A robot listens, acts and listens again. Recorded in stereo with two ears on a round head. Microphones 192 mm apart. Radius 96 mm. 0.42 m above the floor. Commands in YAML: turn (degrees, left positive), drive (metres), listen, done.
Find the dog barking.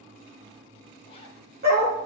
turn: -45
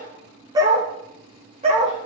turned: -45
turn: -30
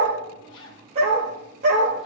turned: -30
turn: -35
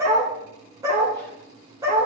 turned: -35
turn: -15
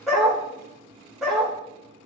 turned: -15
done: "Facing the dog barking."